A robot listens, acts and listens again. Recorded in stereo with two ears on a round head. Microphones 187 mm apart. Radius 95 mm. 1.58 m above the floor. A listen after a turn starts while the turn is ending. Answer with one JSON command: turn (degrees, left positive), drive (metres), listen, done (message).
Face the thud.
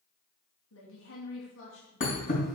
{"turn": 40}
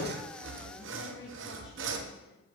{"listen": true}
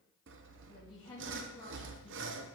{"done": "I heard a thud, but can't make it out now. It was about straight ahead or 100° left."}